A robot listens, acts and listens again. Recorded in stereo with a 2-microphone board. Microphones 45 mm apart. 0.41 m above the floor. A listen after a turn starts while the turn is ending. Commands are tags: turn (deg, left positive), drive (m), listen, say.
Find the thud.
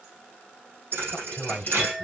<turn deg="-55"/>
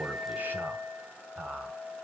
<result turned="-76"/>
<listen/>
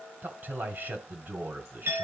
<say>I heard a thud, but can't make it out now. It was about 20° left or 50° right.</say>